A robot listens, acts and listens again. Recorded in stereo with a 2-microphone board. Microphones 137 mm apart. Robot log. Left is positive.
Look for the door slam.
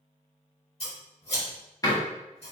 note: The door slam: about 25° left or 155° left.
cmd yaw +25
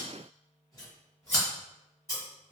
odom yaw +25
cmd idle
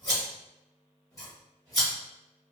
end: I heard a door slam, but can't make it out now. It was about straight ahead or 130° left.